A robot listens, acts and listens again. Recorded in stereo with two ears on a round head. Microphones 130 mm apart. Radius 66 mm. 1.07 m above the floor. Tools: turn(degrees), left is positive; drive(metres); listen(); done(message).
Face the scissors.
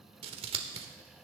turn(degrees=-40)
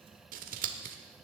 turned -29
turn(degrees=-105)
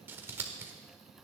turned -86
turn(degrees=-15)
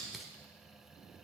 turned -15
done("Found it: scissors, straight ahead.")